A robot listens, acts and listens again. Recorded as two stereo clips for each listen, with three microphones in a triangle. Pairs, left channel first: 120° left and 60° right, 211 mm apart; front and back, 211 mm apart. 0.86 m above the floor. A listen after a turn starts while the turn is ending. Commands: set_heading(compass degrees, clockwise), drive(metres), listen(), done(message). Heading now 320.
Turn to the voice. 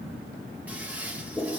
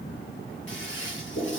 listen()
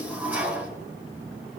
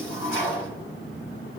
listen()
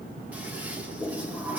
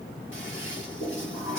done("I can't make out anyone speaking, only a toilet flushing.")